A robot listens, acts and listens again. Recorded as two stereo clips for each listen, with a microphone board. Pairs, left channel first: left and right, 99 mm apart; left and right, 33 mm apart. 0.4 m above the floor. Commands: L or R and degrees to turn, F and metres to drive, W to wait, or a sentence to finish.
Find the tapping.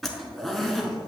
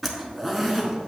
W
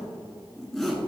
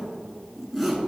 W
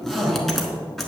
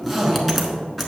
I can't make out tapping, only a zipper.